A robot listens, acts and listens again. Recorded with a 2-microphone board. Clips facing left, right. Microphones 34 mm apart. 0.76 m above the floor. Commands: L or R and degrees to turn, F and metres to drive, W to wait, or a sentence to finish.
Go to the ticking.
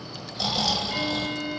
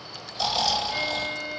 L30
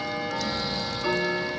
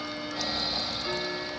L140
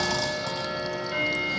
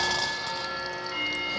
L30
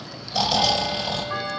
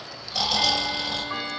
R10
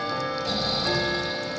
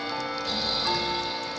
F1.0
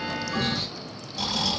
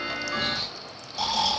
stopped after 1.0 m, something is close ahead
Arrived at the ticking, straight ahead.